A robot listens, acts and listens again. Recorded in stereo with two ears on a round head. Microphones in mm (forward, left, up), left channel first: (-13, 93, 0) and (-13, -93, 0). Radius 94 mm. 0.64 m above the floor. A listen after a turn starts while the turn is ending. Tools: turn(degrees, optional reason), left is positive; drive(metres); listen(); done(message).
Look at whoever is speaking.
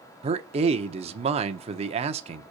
turn(degrees=-30, reason="The man speaking: about 30° right or 150° right.")
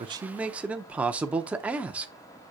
turn(degrees=-10, reason="So it is at 10° right.")
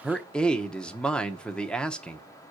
done("Facing the man speaking, under 1 m away.")